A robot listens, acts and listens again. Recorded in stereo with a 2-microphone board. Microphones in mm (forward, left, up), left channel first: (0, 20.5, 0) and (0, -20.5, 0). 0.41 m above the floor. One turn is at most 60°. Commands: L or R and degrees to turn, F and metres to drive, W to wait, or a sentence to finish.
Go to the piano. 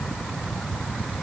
W
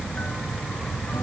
W
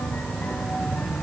I can't make out a piano.